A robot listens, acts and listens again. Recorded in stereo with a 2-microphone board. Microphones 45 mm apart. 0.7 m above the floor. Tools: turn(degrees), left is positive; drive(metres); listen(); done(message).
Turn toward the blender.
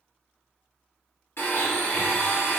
turn(degrees=60)
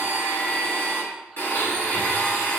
turn(degrees=50)
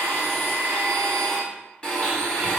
turn(degrees=25)
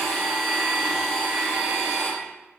turn(degrees=15)
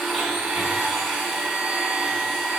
done("Facing the blender.")